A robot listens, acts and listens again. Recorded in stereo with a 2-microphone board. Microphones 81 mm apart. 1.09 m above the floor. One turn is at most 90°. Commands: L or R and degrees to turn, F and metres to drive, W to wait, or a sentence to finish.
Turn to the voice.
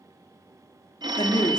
L70
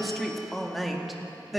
Found it: a woman speaking, straight ahead, 2 to 4 m away.